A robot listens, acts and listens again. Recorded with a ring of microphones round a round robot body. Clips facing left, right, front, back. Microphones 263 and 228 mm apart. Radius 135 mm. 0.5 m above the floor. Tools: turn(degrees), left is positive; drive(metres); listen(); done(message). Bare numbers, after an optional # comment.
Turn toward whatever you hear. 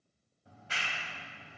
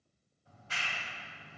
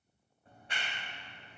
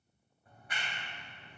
# The clap: 60° left.
turn(60)
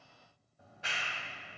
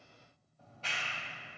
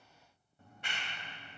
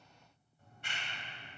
# The clap is now 15° left.
turn(15)
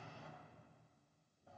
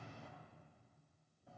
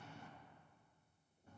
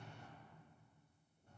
done("Facing the clap.")